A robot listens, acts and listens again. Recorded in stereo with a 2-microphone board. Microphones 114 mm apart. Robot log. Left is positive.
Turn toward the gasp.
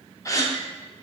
note: The gasp: about 25° left or 155° left.
cmd yaw +25
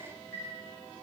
cmd idle
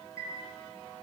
end: I heard a gasp, but can't make it out now. It was about straight ahead or 130° left.